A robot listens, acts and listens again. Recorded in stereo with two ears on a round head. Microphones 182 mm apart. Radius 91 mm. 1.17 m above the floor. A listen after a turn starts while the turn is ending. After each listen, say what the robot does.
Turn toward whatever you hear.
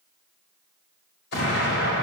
Turn 55° left.
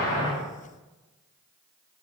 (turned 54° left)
Keep listening.
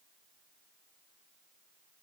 I heard an explosion, but can't make it out now. It was about straight ahead or 75° left.